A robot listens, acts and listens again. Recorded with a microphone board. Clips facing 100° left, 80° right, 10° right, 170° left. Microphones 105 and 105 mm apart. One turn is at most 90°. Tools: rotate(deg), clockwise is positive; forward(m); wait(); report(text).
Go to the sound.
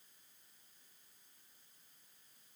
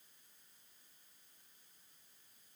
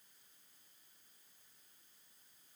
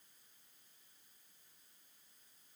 wait()
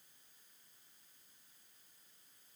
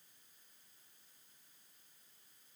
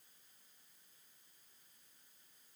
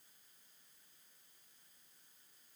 wait()
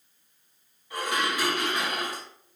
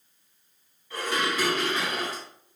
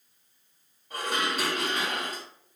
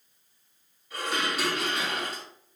rotate(-25)
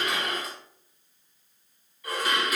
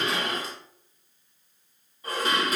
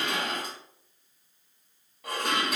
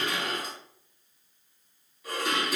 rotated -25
rotate(20)
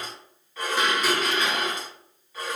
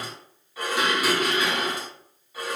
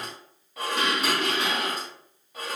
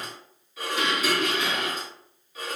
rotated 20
forward(1.0)
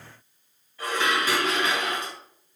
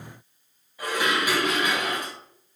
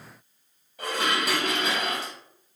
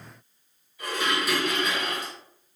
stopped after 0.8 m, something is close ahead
report("Something is in my way. I am facing the dishes clattering but have not reached it.")